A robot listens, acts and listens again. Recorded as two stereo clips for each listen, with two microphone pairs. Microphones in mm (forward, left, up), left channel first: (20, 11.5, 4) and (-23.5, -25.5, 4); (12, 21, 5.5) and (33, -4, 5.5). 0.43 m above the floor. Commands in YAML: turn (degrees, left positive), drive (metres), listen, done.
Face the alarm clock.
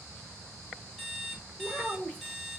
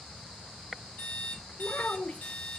turn: 140
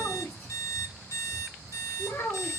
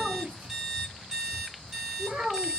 turn: 30
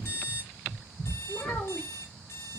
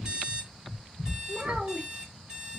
done: "Found it: an alarm clock, straight ahead, 1 to 2 m away."